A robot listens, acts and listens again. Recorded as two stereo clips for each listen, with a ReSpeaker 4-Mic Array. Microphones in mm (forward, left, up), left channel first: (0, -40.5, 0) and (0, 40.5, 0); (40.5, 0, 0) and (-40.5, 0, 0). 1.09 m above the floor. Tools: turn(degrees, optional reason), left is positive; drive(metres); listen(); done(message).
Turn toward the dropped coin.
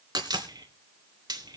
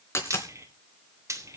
turn(degrees=55, reason="The dropped coin: 55° left.")
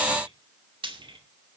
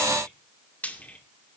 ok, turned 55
done("I heard a dropped coin from this way, but can't make it out now.")